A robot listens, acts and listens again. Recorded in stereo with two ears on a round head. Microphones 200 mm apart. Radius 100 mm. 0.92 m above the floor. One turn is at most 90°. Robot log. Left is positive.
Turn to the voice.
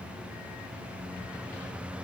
cmd idle
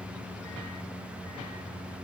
cmd idle
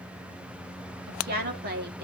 note: The woman speaking: about 45° right or 135° right.
cmd yaw -45
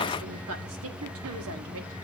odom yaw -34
note: So it is at 95° right.
cmd yaw -90
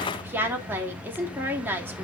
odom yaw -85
note: The woman speaking is now 10° right.
cmd yaw -10
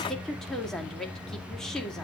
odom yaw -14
end: Facing the woman speaking, 2 to 4 m away.